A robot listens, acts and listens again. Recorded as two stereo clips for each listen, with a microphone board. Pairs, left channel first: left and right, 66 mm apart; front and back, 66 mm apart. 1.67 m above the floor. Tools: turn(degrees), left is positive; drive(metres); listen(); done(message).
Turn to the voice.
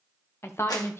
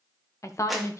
turn(degrees=35)
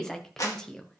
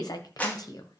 done("Facing the woman speaking, 1 to 2 m away.")